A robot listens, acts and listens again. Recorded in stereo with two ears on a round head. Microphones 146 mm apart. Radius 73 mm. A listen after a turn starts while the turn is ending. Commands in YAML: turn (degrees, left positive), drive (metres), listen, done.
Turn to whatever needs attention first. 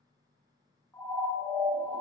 turn: 30
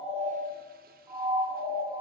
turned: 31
turn: -20
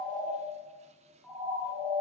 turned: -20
done: "Facing the siren, over 4 m away."